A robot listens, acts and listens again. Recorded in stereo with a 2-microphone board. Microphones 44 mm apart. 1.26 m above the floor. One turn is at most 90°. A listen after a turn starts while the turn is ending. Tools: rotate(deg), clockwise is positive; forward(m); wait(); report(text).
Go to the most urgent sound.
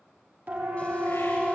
rotate(45)
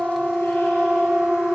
forward(1.0)
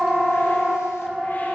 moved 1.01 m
forward(1.0)
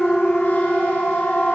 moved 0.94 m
rotate(-10)
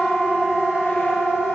forward(1.0)
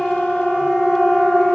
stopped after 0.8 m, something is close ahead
report("I am next to the siren.")